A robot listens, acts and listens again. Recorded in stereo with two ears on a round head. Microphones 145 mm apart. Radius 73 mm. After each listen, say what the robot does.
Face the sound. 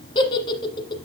Turn 30° left.
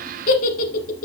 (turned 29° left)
Turn 120° left.
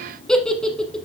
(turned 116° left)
Facing the giggle.